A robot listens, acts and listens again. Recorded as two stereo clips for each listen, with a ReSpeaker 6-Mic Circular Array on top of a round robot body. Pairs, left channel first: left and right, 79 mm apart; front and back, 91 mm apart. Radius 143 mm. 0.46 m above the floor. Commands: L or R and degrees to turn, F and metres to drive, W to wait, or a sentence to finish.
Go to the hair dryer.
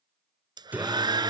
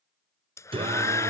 R60
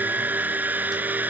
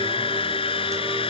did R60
R20
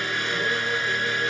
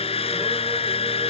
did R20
F1.0
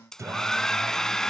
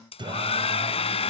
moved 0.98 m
F1.0
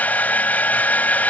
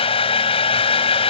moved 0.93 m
L20
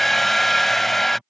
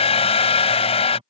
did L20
F1.0
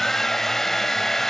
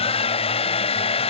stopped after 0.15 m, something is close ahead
I am next to the hair dryer.